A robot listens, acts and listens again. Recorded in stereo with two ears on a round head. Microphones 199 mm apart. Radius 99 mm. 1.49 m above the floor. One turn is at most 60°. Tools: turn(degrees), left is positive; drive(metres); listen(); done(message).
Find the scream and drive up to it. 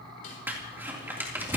listen()
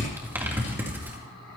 listen()
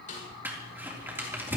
done("I can't make out a scream to turn to.")